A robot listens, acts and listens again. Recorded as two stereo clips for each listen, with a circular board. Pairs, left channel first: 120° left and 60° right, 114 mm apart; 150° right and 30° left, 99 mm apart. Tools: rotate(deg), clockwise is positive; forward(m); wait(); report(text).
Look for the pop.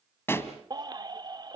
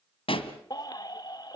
rotate(170)
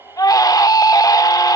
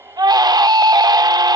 report("Facing where the pop came from. I can't hear it now.")